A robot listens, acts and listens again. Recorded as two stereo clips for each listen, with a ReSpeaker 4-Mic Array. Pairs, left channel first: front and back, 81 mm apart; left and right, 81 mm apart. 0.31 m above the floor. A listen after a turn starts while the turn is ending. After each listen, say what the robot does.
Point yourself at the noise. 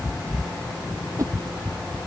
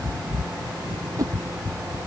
Turn 135° right.
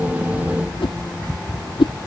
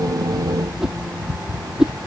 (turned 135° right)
Facing the whoosh.